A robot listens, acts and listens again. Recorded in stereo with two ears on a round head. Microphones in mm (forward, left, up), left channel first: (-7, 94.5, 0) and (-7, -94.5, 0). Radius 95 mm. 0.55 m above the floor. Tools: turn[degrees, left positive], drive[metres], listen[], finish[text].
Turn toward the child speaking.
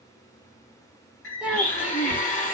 Action: turn[-30]
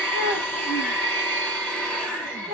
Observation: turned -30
Thought: So it is at 140° right.
Action: turn[-140]
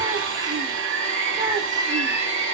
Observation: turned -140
Action: listen[]
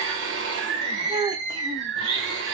Thought: The child speaking is now 15° right.
Action: turn[-15]
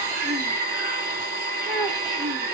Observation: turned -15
Action: finish[Facing the child speaking.]